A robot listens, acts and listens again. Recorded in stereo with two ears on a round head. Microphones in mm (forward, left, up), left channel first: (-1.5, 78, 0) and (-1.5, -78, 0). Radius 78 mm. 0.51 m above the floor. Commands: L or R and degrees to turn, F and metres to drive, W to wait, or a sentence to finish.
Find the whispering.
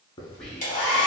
L30
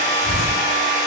W
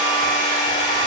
W
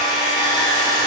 I heard whispering, but can't make it out now. It was about 25° right or 145° left.